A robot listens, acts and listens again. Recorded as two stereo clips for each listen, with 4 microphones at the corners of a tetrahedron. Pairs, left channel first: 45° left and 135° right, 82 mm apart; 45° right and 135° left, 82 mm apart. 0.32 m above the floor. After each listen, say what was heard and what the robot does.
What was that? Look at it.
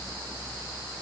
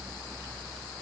Keep listening.
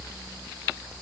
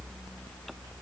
Keep listening.
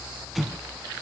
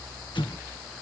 The explosion: 45° right. Turn 45° right.
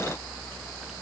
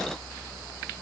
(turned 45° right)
I heard an explosion from this way, but can't make it out now.